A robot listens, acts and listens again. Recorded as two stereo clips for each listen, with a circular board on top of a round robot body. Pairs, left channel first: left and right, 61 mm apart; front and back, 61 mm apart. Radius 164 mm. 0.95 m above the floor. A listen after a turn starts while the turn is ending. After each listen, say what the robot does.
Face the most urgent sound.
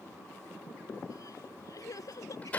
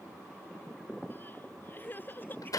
Turn 60° left.
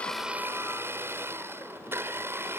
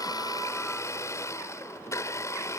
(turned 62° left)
Keep listening.
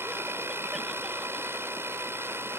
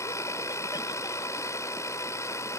Keep listening.
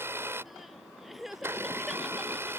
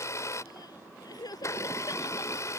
Facing the crying.